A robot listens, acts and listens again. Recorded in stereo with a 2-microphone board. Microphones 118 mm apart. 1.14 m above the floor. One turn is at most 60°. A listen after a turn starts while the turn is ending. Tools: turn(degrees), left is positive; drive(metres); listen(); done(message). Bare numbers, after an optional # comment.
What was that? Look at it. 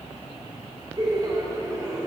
# The laughter: about 30° right or 150° right.
turn(-30)
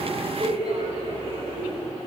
# So it is at 130° right.
turn(-60)
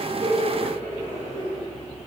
# The laughter is now 85° right.
turn(-60)
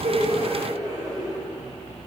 # The laughter is now 35° right.
turn(-35)
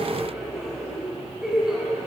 done("Facing the laughter.")